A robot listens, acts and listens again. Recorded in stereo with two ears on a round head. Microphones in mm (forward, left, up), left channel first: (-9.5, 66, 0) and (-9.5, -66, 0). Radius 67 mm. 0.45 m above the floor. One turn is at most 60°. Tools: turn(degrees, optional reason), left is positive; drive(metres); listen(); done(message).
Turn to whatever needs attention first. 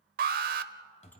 turn(degrees=-60, reason="The alarm: about 65° right or 115° right.")
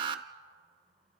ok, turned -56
turn(degrees=-35, reason="So it is at 35° right.")
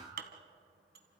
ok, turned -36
listen()
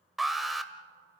done("Facing the alarm, 1 to 2 m away.")